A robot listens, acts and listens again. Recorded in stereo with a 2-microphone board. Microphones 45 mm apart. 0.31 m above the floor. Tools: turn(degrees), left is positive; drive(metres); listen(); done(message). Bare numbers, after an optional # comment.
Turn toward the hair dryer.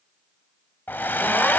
# The hair dryer: about 45° left or 135° left.
turn(45)
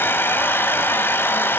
# So it is at 70° left.
turn(70)
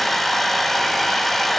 done("Facing the hair dryer, under 1 m away.")